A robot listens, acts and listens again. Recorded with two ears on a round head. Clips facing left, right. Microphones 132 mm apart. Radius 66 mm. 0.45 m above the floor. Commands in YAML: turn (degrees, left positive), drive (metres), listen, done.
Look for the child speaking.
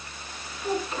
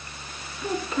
turn: -90
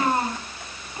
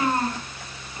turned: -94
turn: 20
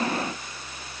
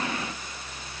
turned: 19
listen: true
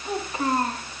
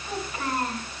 turn: 30
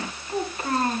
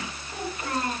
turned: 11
turn: 35
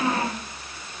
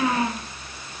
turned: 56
turn: -15
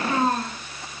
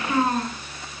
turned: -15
done: "Found it: a child speaking, straight ahead, 2 to 4 m away."